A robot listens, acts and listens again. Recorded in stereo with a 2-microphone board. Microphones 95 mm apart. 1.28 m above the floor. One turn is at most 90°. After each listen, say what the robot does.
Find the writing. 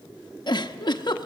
Keep listening.
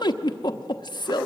Keep listening.
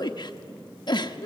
I can't make out writing to turn to.